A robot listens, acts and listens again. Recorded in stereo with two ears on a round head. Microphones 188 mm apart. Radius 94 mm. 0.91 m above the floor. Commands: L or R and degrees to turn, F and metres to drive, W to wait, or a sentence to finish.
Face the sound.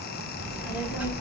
R30
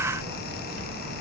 R135
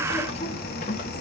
L40
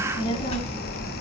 L40
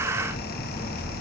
L15
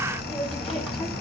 Facing the child speaking.